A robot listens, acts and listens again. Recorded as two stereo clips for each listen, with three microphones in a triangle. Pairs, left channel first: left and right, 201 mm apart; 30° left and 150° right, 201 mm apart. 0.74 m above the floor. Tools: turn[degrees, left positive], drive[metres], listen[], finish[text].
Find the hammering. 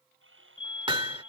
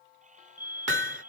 Thought: The hammering: 155° right.
Action: turn[-155]
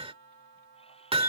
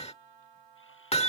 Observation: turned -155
Thought: The hammering is now 30° right.
Action: turn[-30]
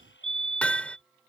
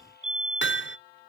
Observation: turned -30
Action: finish[Facing the hammering.]